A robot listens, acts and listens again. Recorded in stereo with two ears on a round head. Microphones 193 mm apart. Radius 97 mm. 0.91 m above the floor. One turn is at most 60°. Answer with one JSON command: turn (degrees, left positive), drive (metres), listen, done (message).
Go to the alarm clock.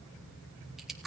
{"listen": true}
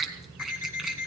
{"turn": 40}
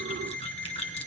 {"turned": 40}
{"drive": 1.0}
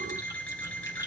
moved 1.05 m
{"drive": 1.0}
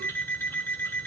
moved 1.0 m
{"turn": 10}
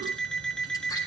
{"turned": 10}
{"drive": 1.0}
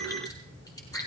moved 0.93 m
{"listen": true}
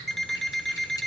{"drive": 1.0}
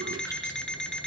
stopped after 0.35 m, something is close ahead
{"done": "I am next to the alarm clock."}